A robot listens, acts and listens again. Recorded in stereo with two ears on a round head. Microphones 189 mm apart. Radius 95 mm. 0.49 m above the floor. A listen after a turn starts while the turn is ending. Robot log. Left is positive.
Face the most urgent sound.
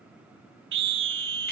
note: The scream: about 65° right or 115° right.
cmd yaw -65
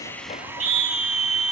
note: So it is at 40° right.
cmd yaw -40
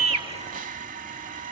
cmd idle
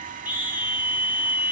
note: The scream is now 10° right.
cmd yaw -10
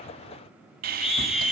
end: Found it: a scream, straight ahead.